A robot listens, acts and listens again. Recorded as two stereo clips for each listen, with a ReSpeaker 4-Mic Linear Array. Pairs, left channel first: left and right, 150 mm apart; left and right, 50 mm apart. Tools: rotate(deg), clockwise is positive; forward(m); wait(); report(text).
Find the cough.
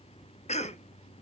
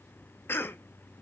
rotate(-45)
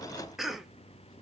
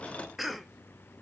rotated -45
report("Found it: a cough, straight ahead.")